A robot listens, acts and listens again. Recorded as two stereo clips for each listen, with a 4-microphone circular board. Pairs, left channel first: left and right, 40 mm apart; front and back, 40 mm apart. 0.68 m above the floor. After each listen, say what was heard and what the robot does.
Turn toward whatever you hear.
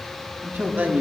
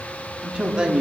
The man speaking: 115° right. Turn 115° right.
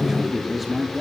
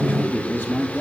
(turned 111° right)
Facing the man speaking, 1 to 2 m away.